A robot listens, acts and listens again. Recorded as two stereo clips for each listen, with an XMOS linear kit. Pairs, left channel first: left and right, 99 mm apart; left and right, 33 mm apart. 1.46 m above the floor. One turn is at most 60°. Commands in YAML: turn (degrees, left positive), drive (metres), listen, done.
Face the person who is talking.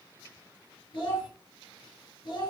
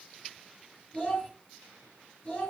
turn: 50
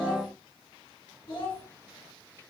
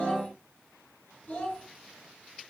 turn: 60
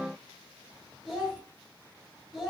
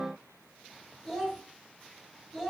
done: "Found it: a child speaking, straight ahead, 1 to 2 m away."